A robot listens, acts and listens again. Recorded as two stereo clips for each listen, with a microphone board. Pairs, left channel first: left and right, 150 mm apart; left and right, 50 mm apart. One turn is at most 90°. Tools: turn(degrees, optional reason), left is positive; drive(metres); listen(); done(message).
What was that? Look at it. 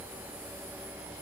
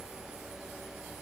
listen()
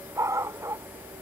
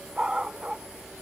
turn(degrees=-20, reason="The dog barking: about 20° right or 160° right.")
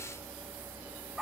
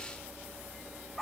done("Facing the dog barking.")